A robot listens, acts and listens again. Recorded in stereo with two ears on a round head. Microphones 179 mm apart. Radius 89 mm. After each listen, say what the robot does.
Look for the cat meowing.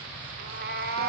Turn 50° right.
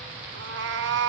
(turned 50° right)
Turn 75° right.
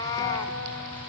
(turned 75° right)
Turn 20° left.
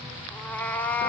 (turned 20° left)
Turn 10° left.
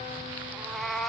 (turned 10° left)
Facing the cat meowing, under 1 m away.